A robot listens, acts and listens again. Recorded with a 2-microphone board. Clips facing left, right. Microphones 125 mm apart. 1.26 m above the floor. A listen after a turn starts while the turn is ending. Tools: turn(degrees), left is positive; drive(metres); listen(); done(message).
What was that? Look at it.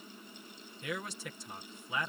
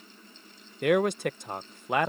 turn(degrees=-65)
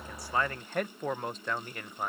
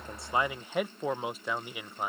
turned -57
turn(degrees=-10)
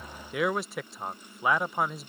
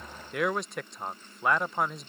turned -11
done("Found it: a man speaking, straight ahead.")